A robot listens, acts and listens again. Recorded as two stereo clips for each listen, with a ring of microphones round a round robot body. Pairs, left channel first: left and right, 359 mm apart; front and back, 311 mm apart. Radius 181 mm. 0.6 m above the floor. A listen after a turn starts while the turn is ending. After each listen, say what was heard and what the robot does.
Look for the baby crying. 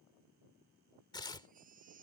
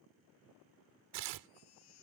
The baby crying: 20° right. Turn 20° right.
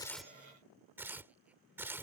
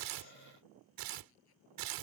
Keep listening.
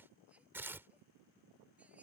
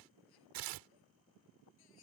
Keep listening.
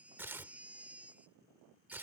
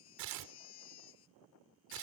Found it: a baby crying, straight ahead.